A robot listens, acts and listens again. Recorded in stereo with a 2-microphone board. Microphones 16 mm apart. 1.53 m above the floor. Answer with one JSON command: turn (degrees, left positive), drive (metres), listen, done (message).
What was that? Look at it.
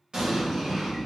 {"turn": -70}
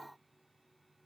{"listen": true}
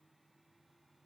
{"done": "I heard an explosion, but can't make it out now. It was about straight ahead or 40° right."}